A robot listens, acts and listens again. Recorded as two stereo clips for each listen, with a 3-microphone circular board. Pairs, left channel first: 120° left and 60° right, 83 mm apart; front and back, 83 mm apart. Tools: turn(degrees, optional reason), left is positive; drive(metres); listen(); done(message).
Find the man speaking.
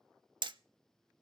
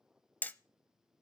listen()
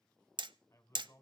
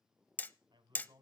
turn(degrees=170, reason="The man speaking: 170° left.")
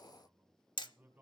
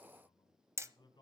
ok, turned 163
turn(degrees=10, reason="The man speaking is now 10° left.")
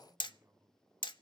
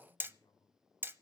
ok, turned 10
done("Facing the man speaking.")